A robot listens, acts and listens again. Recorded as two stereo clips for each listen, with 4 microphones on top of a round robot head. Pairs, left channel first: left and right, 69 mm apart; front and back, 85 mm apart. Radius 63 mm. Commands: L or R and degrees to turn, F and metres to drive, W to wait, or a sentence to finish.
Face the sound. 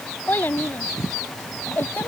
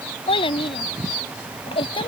L20
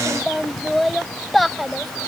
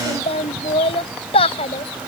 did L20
Found it: a child speaking, straight ahead.